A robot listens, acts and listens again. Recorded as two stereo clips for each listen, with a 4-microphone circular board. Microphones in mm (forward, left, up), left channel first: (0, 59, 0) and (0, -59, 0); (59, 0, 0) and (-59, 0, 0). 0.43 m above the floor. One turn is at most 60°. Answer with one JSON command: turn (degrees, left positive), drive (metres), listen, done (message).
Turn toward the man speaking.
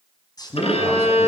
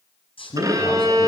{"turn": 35}
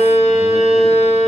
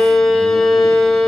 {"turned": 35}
{"listen": true}
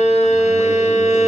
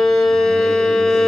{"listen": true}
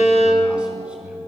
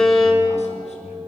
{"turn": -10}
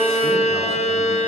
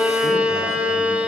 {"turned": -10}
{"listen": true}
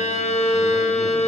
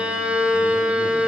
{"listen": true}
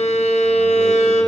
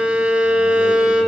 {"done": "Facing where the man speaking came from. I can't hear it now."}